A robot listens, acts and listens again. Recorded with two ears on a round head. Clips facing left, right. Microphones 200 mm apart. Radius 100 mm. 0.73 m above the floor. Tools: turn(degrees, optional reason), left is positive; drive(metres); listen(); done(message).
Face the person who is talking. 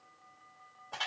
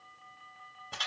listen()
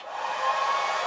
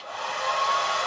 listen()
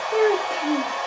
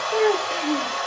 turn(degrees=30)
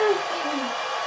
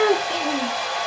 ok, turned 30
turn(degrees=-25, reason="So it is at 25° right.")
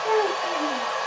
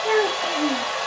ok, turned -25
turn(degrees=-30, reason="The child speaking is now 30° right.")
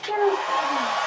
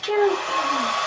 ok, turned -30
turn(degrees=-25, reason="The child speaking is now 25° right.")
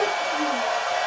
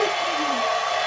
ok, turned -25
listen()
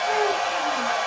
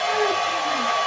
listen()
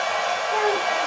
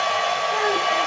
done("I heard a child speaking from this way, but can't make it out now.")